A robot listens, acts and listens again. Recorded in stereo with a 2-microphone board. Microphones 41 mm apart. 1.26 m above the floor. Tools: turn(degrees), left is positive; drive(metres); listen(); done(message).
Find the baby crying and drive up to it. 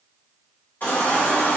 turn(degrees=45)
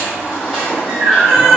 drive(metres=1.0)
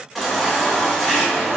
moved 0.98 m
drive(metres=1.0)
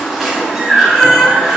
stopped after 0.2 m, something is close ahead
done("I am next to the baby crying.")